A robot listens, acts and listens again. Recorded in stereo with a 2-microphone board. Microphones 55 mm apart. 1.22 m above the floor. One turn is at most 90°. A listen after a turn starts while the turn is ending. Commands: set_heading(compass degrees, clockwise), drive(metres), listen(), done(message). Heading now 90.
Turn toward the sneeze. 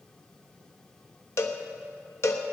listen()
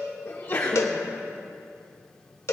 set_heading(40)
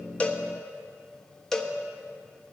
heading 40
listen()
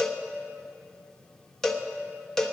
done("I heard a sneeze, but can't make it out now. It was about straight ahead or 80° left.")